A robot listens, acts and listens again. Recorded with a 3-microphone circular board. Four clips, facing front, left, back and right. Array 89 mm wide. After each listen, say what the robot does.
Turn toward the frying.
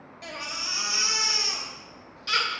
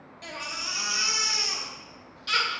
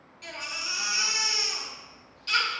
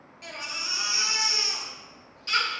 Keep listening.
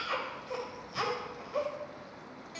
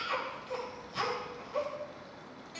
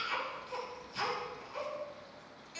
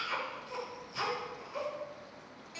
Keep listening.
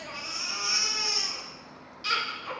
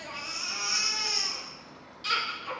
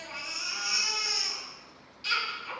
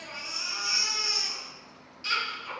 I can't make out frying, only a baby crying.